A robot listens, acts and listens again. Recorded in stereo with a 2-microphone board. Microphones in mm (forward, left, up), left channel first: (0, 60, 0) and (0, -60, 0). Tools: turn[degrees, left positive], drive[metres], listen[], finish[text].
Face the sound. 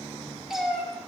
Action: turn[-30]
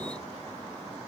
Action: listen[]
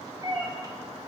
Thought: So it is at 145° right.
Action: turn[-145]
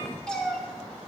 Action: finish[Found it: a cat meowing, straight ahead.]